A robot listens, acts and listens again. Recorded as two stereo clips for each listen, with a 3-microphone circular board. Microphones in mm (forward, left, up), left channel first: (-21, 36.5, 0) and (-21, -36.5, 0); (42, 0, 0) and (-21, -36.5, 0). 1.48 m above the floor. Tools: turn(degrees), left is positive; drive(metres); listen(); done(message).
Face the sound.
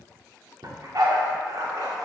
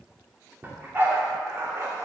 turn(degrees=-110)
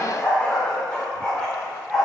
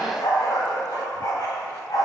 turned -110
done("Found it: a dog barking, straight ahead.")